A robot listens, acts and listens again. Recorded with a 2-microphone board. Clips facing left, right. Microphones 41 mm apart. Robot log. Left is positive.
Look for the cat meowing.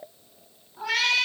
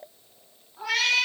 cmd yaw +30
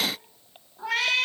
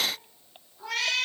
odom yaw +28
note: So it is at 150° left.
cmd yaw +150
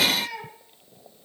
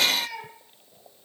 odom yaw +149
end: Found it: a cat meowing, straight ahead.